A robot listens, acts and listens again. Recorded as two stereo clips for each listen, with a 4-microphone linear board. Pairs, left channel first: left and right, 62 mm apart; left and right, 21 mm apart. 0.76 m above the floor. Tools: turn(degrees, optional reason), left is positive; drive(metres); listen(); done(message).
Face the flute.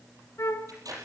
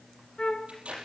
turn(degrees=60, reason="The flute: about 60° left or 120° left.")
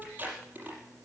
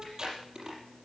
listen()
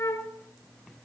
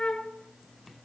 turn(degrees=55, reason="So it is at 55° left.")
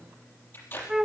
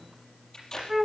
turn(degrees=-10, reason="The flute is now 10° right.")
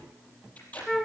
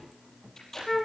done("Facing the flute, 1 to 2 m away.")